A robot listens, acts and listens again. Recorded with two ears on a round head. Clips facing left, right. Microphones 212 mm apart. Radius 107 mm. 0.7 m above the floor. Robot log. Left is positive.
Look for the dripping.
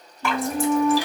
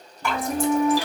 note: The dripping: about 60° left or 120° left.
cmd yaw +60
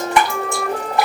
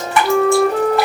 note: So it is at 20° left.
cmd yaw +20
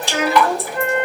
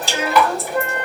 note: The dripping is now 10° right.
cmd yaw -10
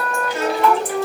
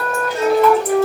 cmd idle
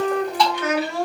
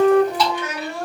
end: Facing the dripping.